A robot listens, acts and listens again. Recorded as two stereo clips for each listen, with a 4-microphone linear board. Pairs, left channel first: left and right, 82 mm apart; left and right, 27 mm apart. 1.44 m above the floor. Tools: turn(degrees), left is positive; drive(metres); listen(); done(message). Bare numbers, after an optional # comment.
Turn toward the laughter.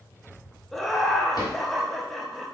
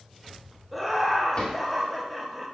turn(30)
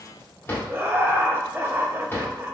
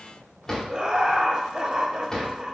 # So it is at 30° right.
turn(-30)
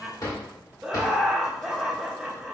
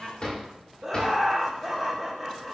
# The laughter is now 10° right.
turn(-10)
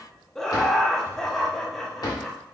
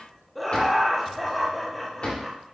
done("Facing the laughter.")